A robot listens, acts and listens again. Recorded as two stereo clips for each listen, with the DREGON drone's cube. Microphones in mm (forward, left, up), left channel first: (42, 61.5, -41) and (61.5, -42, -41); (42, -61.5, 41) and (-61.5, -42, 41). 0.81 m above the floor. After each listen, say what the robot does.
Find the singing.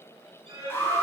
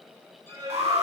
Turn 135° right.
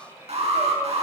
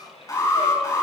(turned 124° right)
Turn 10° right.
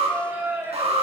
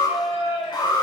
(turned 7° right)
Turn 10° right.
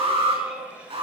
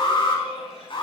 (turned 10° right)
Facing the singing.